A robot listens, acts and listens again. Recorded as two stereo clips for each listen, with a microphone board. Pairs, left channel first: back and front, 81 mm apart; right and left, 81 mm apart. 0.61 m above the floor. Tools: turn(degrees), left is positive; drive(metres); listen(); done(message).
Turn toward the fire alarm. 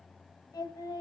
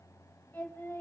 listen()
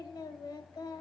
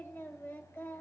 listen()
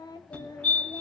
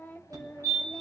turn(degrees=110)
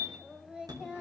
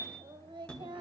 listen()
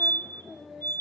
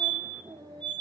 turn(degrees=-15)
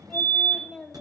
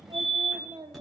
done("Facing the fire alarm.")